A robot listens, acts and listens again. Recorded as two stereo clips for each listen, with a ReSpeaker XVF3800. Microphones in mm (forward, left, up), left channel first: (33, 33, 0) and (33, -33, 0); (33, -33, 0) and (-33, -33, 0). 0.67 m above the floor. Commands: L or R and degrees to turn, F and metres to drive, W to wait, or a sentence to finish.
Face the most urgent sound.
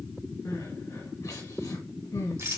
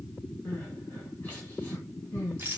L65
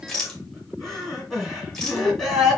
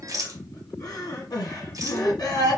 Facing the crying, 2 to 4 m away.